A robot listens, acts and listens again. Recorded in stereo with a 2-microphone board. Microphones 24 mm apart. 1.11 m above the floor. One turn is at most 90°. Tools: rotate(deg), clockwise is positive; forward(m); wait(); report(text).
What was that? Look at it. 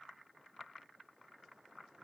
wait()
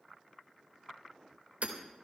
rotate(70)
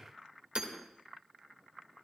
rotate(40)
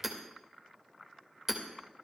rotate(10)
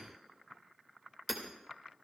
report("Found it: hammering, straight ahead.")